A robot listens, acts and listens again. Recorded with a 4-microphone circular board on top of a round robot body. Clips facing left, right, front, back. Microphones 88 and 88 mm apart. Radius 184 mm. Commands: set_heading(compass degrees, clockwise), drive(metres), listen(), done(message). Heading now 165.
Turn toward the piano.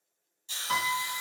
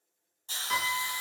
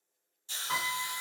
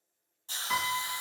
set_heading(110)
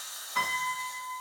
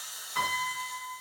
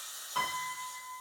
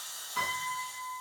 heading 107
done("Facing the piano.")